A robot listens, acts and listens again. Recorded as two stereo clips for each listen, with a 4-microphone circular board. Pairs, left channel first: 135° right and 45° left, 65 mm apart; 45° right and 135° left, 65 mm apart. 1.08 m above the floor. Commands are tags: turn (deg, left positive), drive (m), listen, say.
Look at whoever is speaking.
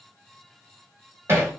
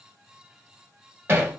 <listen/>
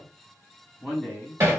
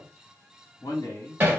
<turn deg="-45"/>
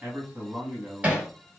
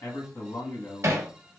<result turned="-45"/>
<turn deg="-20"/>
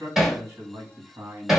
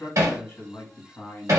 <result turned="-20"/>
<say>Found it: a man speaking, straight ahead.</say>